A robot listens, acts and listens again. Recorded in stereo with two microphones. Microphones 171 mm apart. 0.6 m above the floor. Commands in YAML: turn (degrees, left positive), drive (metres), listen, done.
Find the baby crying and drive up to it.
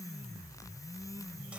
listen: true
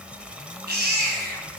turn: -90
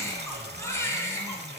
turn: 15
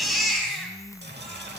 drive: 1.0
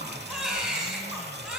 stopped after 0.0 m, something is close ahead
done: "Blocked. The baby crying is further on, straight ahead."